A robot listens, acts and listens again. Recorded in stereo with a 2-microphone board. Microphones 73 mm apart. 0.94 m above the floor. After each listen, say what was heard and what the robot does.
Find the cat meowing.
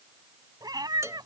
The cat meowing: about 70° right or 110° right. Turn 70° right.
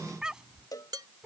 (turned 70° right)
So it is at 15° right. Turn 15° right.
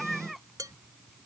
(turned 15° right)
Facing the cat meowing.